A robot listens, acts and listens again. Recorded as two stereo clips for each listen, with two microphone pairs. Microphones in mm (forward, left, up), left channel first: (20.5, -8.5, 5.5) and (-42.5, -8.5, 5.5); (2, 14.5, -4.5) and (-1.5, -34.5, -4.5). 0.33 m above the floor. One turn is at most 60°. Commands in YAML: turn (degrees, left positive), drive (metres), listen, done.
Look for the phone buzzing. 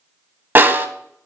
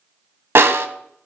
listen: true
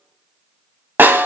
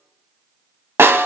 listen: true
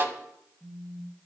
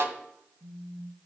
turn: -30
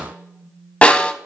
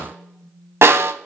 turn: 25
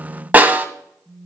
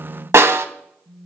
turn: -20
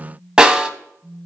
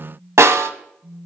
done: "Facing the phone buzzing, 1 to 2 m away."